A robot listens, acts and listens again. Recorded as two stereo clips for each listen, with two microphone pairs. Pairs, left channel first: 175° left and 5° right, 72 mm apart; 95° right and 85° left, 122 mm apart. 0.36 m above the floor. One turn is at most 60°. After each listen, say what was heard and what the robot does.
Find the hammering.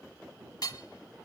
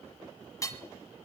The hammering: 155° right. Turn 60° right.
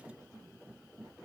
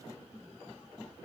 Nothing new. It was at 95° right. Turn 60° right.
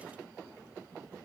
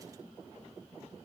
Nothing new. It was at 35° right. Turn 35° right.
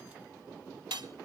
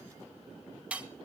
Found it: hammering, straight ahead, 1 to 2 m away.